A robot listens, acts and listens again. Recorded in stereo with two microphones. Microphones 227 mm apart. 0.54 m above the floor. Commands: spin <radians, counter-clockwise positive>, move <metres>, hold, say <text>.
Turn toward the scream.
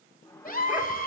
spin 0.70
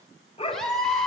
say Facing the scream, 2 to 4 m away.